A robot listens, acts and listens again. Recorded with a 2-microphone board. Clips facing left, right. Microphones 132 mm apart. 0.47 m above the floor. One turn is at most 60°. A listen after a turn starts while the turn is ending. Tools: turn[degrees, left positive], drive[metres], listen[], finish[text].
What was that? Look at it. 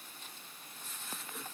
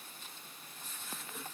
Action: listen[]
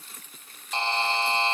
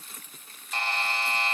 Thought: The buzzer: about 25° left or 155° left.
Action: turn[25]
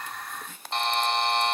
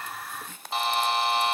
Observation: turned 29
Action: finish[Facing the buzzer, under 1 m away.]